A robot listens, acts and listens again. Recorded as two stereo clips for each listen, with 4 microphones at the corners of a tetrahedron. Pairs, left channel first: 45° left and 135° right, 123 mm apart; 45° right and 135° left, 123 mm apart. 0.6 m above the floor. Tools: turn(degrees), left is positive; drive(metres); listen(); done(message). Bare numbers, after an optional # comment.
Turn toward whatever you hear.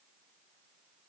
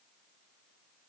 listen()
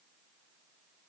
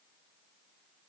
listen()
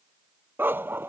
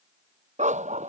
# The dog barking: 155° left.
turn(155)
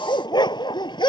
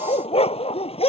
done("Facing the dog barking.")